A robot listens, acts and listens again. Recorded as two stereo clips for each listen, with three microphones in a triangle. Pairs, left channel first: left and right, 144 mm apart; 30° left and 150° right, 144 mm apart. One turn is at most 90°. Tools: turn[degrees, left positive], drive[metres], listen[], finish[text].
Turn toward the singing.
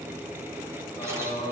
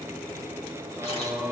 Thought: The singing: 135° left.
Action: turn[90]
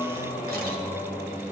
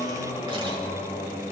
Thought: The singing is now 60° left.
Action: turn[60]
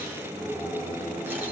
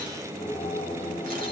Thought: The singing is now 15° right.
Action: turn[-15]
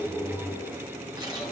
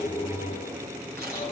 Action: finish[Facing the singing.]